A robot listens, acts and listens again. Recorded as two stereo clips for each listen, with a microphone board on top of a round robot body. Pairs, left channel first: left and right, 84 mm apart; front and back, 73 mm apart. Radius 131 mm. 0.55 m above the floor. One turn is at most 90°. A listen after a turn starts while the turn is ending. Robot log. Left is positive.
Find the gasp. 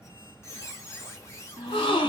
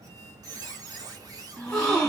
note: The gasp: 80° left.
cmd yaw +80
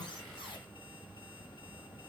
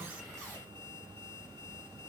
end: Facing where the gasp came from. I can't hear it now.